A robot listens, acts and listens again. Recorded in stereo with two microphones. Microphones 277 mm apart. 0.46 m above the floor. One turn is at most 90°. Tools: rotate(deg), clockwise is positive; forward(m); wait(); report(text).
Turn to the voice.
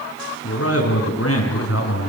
rotate(-60)
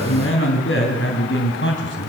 rotate(-45)
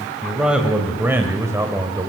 rotate(15)
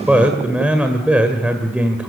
report("Found it: a man speaking, straight ahead, 1 to 2 m away.")